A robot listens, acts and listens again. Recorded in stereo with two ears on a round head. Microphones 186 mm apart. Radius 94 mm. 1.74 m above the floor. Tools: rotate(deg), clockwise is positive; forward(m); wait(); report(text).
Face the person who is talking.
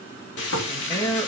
rotate(-15)
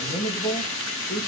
rotate(-150)
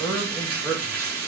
report("Found it: a man speaking, straight ahead, 2 to 4 m away.")